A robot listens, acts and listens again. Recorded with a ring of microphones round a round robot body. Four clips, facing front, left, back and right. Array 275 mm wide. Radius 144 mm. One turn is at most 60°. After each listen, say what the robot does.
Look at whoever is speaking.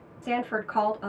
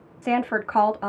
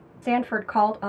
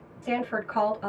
Turn 60° left.
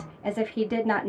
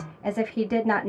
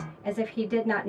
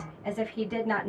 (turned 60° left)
Turn 55° left.
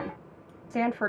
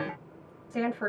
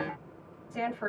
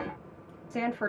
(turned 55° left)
Turn 10° right.
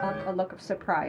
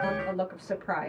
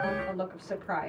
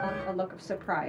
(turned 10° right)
Found it: a woman speaking, straight ahead.